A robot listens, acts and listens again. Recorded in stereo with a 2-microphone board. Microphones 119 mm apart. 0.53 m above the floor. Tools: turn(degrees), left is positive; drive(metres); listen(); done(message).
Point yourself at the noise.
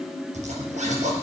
turn(degrees=-90)
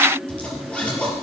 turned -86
turn(degrees=10)
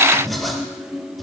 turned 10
done("Facing the zipper, over 4 m away.")